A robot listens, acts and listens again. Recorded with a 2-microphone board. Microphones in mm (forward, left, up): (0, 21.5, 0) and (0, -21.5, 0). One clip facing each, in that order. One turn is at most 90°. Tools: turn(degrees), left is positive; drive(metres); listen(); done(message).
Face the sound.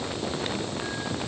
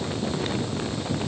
listen()
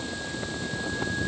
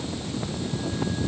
listen()
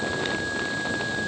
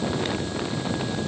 done("I can't make out anything.")